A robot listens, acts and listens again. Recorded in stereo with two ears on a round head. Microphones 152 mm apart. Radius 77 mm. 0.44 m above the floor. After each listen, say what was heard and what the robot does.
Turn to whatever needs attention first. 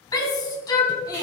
The shout: about 25° left or 155° left. Turn 25° left.
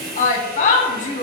So it is at 130° left. Turn 130° left.
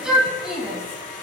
Facing the shout, 2 to 4 m away.